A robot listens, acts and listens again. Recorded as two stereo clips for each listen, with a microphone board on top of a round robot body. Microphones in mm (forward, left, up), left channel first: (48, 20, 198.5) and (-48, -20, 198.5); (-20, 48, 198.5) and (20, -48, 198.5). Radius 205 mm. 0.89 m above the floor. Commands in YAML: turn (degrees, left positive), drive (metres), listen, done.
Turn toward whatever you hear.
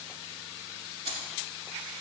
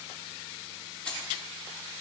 turn: -170
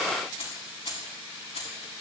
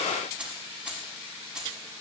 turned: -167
turn: 15
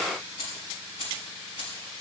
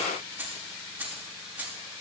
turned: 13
turn: 10
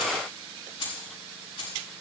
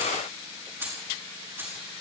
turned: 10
done: "Facing the keys jangling."